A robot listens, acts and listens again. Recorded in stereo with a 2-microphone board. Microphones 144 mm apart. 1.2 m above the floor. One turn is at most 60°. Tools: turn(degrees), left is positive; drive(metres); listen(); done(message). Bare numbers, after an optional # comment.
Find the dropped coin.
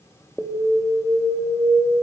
listen()
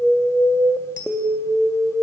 turn(-60)
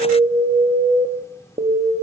# Nothing new. It was at 30° right.
turn(-30)
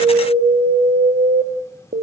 done("Facing where the dropped coin came from. I can't hear it now.")